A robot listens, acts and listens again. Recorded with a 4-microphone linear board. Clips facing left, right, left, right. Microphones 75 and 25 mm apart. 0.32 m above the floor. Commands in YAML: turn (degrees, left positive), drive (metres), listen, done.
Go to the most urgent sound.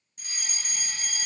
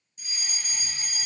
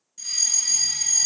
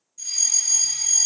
turn: 60
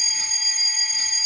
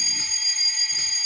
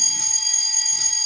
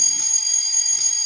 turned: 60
turn: 15
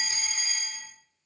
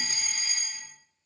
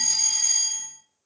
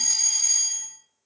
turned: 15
drive: 1.0
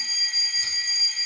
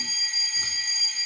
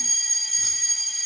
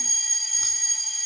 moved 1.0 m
turn: 10
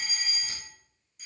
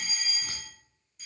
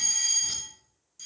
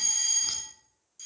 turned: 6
drive: 1.0
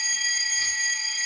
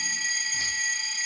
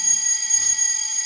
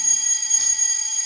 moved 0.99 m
turn: 10
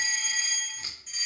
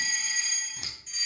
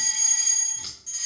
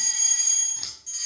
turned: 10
drive: 1.0
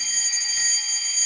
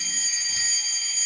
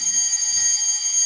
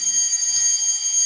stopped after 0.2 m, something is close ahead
done: "I am next to the fire alarm."